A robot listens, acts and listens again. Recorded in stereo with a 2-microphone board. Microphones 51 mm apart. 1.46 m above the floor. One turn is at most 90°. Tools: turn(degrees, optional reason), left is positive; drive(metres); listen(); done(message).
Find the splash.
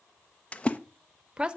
turn(degrees=25, reason="The splash: about 25° left or 155° left.")
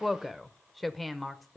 listen()
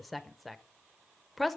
done("I heard a splash, but can't make it out now. It was about straight ahead or 130° left.")